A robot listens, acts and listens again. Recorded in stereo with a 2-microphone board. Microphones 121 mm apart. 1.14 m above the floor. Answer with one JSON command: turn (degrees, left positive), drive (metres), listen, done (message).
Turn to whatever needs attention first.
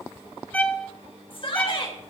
{"turn": 45}
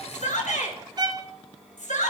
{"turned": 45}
{"turn": 90}
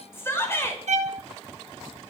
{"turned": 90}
{"turn": 20}
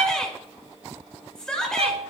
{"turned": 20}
{"done": "Facing the shout, over 4 m away."}